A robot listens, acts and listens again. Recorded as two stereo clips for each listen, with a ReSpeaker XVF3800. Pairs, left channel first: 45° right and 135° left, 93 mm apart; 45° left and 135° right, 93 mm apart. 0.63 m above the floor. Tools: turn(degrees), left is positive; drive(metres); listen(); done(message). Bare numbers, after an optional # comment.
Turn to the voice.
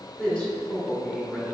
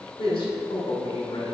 # The man speaking: 30° left.
turn(30)
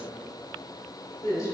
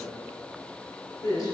done("Facing the man speaking, 1 to 2 m away.")